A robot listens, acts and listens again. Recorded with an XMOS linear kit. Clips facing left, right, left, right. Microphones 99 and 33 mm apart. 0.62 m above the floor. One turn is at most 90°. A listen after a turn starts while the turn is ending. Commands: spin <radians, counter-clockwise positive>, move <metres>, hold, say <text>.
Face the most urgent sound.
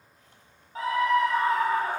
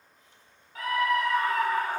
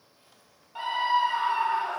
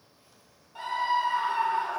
spin 0.52
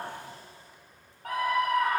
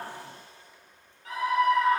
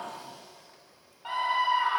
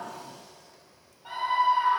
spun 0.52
spin 1.57
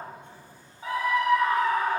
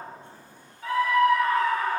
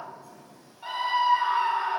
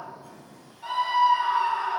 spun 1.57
spin 0.35
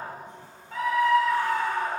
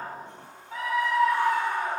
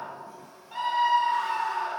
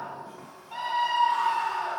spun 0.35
say Found it: a scream, straight ahead, 2 to 4 m away.